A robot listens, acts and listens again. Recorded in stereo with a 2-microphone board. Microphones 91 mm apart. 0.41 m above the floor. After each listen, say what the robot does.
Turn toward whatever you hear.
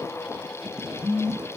Turn 20° left.
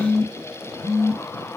Turn 140° left.
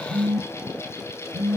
Turn 25° right.
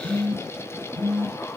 Facing the phone buzzing, 1 to 2 m away.